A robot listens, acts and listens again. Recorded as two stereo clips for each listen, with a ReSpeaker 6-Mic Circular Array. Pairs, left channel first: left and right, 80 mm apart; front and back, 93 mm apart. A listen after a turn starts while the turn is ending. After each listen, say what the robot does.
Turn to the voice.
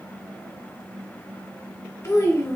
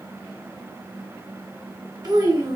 Turn 140° left.
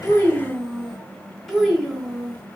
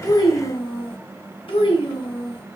Found it: a child speaking, straight ahead, under 1 m away.